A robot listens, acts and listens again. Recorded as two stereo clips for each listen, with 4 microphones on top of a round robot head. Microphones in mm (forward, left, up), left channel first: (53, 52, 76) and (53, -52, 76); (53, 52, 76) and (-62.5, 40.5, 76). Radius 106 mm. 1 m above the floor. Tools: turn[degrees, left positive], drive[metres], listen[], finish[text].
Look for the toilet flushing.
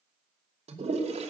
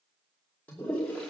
Thought: The toilet flushing: 75° right.
Action: turn[-75]
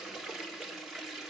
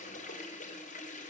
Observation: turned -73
Action: finish[Found it: a toilet flushing, straight ahead.]